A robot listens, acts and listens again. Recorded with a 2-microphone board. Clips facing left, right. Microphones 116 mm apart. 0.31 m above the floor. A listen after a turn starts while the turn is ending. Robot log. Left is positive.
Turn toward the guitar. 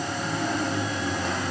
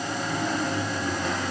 cmd idle
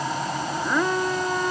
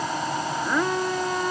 cmd idle
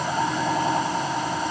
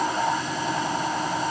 end: I can't make out a guitar.